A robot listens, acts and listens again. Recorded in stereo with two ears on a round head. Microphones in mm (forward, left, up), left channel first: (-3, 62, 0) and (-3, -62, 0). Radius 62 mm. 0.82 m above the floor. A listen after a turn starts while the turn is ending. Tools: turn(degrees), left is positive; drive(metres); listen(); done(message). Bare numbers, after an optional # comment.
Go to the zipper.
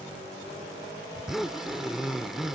turn(-30)
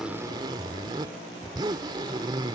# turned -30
# So it is at 145° right.
turn(-145)
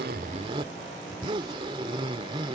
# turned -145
# The zipper is now 40° right.
turn(-40)
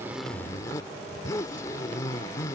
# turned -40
# The zipper is now 25° left.
turn(25)
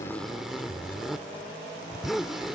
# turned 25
drive(1.0)
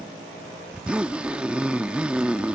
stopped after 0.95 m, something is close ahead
# The zipper is now 10° right.
turn(-10)
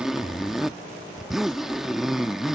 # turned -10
done("I am next to the zipper.")